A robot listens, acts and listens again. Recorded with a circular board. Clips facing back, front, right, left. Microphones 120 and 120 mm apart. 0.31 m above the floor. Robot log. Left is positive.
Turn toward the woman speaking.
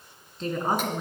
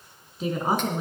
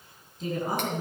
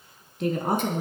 note: The woman speaking: 80° left.
cmd yaw +80
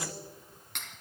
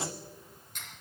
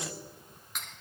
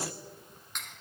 cmd idle
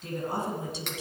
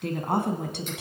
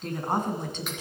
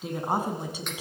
note: The woman speaking is now 10° left.
cmd yaw +10
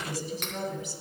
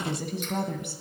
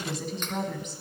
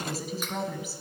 note: The woman speaking is now 10° left.
cmd yaw +10
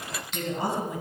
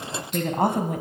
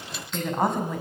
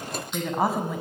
end: Found it: a woman speaking, straight ahead, 1 to 2 m away.